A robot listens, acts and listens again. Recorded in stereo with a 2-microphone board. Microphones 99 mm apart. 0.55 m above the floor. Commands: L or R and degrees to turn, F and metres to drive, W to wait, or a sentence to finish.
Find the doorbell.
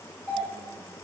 L20
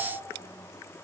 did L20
W
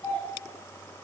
L135
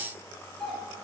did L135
Found it: a doorbell, straight ahead.